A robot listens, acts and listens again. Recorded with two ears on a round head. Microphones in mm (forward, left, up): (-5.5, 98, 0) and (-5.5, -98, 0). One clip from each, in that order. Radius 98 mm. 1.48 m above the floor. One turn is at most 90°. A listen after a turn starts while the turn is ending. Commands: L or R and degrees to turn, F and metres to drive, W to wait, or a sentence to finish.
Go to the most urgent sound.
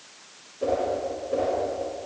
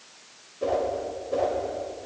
W
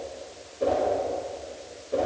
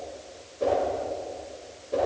W
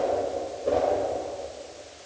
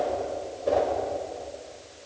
I can't make out anything urgent to turn to.